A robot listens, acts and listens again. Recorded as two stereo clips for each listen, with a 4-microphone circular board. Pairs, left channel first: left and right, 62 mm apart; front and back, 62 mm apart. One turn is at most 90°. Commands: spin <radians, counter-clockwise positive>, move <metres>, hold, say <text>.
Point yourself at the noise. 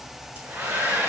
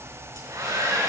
spin -1.57
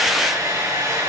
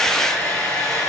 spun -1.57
spin -1.40
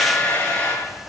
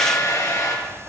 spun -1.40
spin 0.35
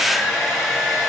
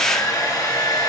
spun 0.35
spin -0.17
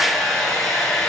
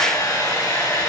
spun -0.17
say Found it: a hair dryer, straight ahead, over 4 m away.